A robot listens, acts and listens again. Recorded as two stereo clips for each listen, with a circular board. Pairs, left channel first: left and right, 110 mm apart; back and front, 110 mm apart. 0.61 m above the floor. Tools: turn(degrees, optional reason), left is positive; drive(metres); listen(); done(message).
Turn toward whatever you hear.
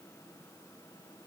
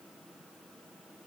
listen()
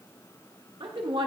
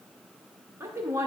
turn(degrees=-60, reason="The woman speaking: 60° right.")
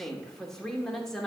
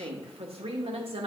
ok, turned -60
done("Facing the woman speaking, 1 to 2 m away.")